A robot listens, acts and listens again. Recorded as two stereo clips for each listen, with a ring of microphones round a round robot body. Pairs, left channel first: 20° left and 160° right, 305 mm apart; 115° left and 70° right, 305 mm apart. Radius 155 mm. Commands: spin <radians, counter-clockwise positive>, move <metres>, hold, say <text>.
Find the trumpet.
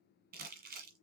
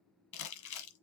hold
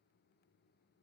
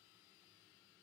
hold
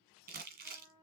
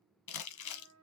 spin -0.61
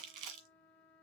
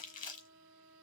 say Facing the trumpet.